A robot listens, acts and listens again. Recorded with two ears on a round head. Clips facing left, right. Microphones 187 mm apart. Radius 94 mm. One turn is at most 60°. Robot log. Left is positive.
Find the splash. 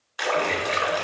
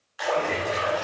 note: The splash: about 70° left or 110° left.
cmd yaw +60
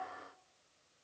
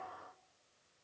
cmd idle
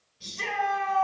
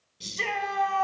end: I heard a splash, but can't make it out now. It was about 10° left or 50° left.